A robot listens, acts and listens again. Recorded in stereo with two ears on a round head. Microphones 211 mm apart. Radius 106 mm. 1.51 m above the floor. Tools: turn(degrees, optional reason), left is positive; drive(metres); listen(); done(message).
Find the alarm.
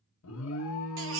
turn(degrees=65, reason="The alarm: about 65° left or 115° left.")
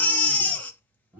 done("Found it: an alarm, straight ahead, under 1 m away.")